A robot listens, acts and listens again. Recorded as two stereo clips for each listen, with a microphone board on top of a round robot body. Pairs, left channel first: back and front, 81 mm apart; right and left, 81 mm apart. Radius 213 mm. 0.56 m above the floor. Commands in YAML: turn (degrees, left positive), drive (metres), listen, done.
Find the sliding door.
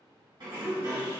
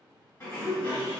turn: -35
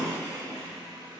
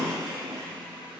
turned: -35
done: "Found it: a sliding door, straight ahead, 1 to 2 m away."